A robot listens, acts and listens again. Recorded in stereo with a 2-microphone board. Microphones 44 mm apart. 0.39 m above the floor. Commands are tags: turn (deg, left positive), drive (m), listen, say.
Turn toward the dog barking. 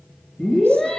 <listen/>
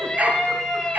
<turn deg="-40"/>
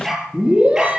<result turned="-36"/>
<turn deg="-15"/>
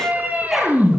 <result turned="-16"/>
<listen/>
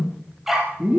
<say>Facing the dog barking, over 4 m away.</say>